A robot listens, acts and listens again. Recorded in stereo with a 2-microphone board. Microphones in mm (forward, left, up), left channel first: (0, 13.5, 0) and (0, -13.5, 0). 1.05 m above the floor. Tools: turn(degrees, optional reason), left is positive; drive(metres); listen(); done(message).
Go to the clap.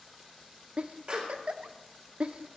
turn(degrees=-50, reason="The clap: about 50° right or 130° right.")
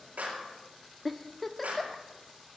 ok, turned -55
turn(degrees=-75, reason="So it is at 75° right.")
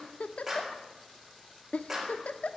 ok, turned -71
drive(metres=1.0)
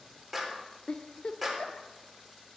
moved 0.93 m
drive(metres=1.0)
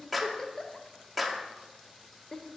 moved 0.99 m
drive(metres=1.0)
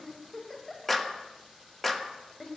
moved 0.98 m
turn(degrees=10, reason="The clap is now 10° left.")
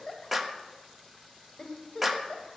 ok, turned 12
drive(metres=1.0)
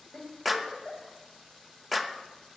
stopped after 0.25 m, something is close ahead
done("I am next to the clap.")